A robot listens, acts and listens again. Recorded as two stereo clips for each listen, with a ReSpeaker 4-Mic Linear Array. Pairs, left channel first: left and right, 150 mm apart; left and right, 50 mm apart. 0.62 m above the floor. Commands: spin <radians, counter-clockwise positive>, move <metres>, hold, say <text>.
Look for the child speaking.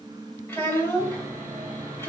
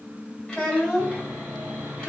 spin 0.26
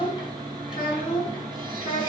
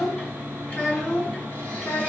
spin 0.52
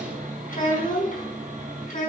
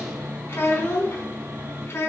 spin 2.09
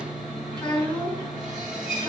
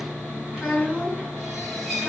say Facing the child speaking, over 4 m away.